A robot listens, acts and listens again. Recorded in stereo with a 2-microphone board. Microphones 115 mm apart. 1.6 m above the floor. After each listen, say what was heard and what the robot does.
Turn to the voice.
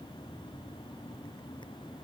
Keep listening.
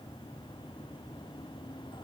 Keep listening.
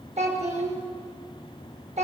The child speaking: about 75° right or 105° right. Turn 75° right.
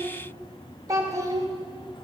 So it is at 30° right. Turn 30° right.
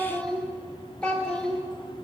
The child speaking is now 10° left. Turn 10° left.
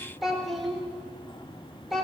Found it: a child speaking, straight ahead, 2 to 4 m away.